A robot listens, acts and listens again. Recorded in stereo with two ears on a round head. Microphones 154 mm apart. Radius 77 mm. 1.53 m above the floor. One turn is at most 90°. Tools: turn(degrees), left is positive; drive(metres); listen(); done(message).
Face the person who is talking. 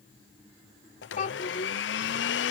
turn(degrees=50)
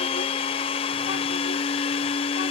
listen()
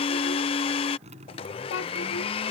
turn(degrees=80)
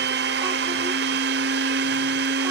listen()
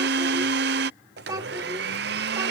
turn(degrees=-20)
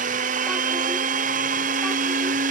listen()
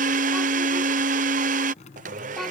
listen()
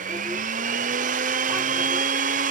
done("I heard a child speaking from this way, but can't make it out now.")